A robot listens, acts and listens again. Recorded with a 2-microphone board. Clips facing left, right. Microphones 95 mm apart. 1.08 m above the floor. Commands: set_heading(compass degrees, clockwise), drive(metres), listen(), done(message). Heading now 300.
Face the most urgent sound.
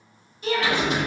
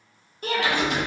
set_heading(350)
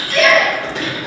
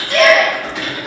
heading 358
set_heading(68)
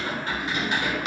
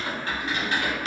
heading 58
set_heading(68)
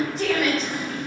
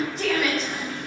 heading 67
done("Facing the shout.")